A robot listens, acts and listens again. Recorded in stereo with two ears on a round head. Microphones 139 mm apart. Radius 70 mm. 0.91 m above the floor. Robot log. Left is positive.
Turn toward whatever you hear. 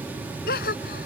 note: The gasp: about 70° left or 110° left.
cmd yaw +70
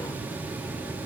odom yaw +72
cmd idle
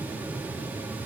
end: I heard a gasp, but can't make it out now. It was about 5° right or 40° left.